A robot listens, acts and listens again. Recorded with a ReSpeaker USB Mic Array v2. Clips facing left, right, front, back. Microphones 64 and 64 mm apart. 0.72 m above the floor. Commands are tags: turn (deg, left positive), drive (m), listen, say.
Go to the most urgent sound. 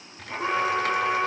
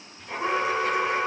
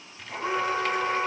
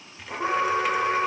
<turn deg="-175"/>
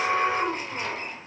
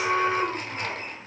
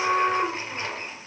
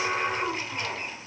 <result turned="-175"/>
<turn deg="30"/>
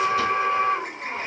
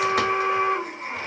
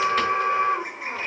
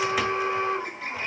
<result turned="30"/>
<turn deg="-10"/>
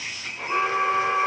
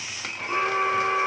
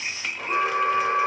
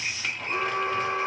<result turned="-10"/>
<drive m="1.0"/>
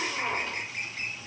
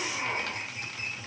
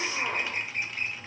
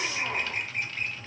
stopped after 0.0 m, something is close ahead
<turn deg="15"/>
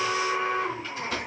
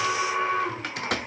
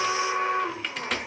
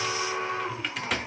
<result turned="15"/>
<say>Something is in my way. I am facing the alarm but have not reached it.</say>